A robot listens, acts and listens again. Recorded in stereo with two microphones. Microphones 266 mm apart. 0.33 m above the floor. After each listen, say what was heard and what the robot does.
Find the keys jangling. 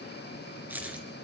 Turn 30° right.
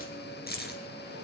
So it is at 40° left. Turn 40° left.
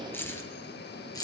The keys jangling is now 15° left. Turn 15° left.
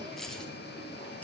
Keep listening.
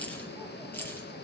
The keys jangling is now 10° left. Turn 10° left.
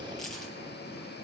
Found it: keys jangling, straight ahead.